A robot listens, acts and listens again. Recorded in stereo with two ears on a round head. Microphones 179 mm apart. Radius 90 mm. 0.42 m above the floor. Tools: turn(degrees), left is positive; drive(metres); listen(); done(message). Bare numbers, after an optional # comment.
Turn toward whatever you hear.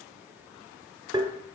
# The tapping: about 25° right or 155° right.
turn(-25)
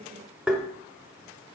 done("Found it: tapping, straight ahead, 1 to 2 m away.")